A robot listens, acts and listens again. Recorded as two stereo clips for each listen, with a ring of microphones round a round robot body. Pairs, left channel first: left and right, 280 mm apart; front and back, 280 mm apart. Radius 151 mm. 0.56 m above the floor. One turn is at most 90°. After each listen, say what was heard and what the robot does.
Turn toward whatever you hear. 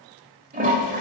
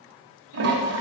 The toilet flushing: 150° right. Turn 90° right.
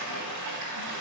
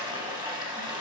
The toilet flushing is now 105° right. Turn 90° right.
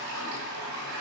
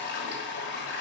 The toilet flushing is now 50° right. Turn 50° right.
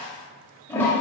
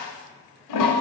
Found it: a toilet flushing, straight ahead.